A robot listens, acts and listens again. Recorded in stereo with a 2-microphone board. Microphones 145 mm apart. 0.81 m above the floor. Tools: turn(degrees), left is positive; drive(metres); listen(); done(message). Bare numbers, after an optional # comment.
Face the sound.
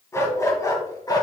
# The dog barking: about 25° left or 155° left.
turn(25)
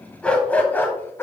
# The dog barking: about 15° left or 165° left.
turn(15)
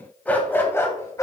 # The dog barking: about 20° left or 160° left.
turn(20)
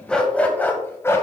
# The dog barking: about 20° left or 160° left.
turn(20)
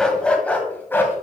turn(30)
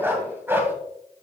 # So it is at 15° right.
turn(-15)
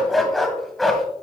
done("Facing the dog barking, 1 to 2 m away.")